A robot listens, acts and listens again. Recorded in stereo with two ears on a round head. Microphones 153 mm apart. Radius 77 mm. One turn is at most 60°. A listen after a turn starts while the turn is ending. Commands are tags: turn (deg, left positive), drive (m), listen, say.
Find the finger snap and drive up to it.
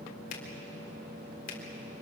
<turn deg="55"/>
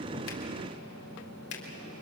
<turn deg="60"/>
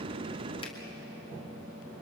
<turn deg="10"/>
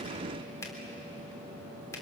<turn deg="15"/>
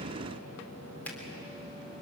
<turn deg="10"/>
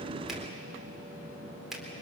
<drive m="1.0"/>
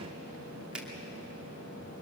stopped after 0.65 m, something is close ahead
<say>Something is in my way. I am facing the finger snap but have not reached it.</say>